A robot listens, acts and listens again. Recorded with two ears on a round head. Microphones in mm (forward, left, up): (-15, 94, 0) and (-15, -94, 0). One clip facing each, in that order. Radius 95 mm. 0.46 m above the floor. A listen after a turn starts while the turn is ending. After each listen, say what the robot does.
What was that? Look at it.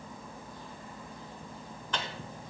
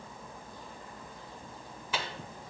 Turn 30° right.
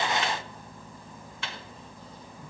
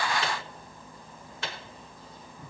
Turn 140° right.
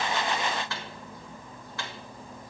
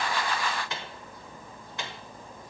Turn 20° right.
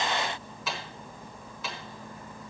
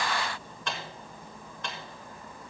Found it: a microwave, straight ahead, 1 to 2 m away.